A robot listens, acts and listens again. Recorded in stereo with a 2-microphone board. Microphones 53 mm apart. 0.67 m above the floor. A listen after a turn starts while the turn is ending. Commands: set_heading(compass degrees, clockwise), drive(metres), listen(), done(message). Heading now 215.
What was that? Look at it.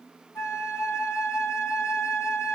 set_heading(155)
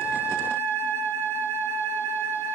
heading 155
set_heading(95)
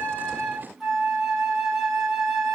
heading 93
done("Facing the flute.")